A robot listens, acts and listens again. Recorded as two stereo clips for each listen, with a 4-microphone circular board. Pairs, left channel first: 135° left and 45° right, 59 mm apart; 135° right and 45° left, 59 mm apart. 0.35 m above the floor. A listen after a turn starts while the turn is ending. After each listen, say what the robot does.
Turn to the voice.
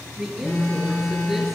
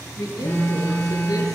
Turn 130° right.
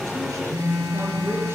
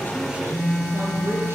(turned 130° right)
Facing the woman speaking.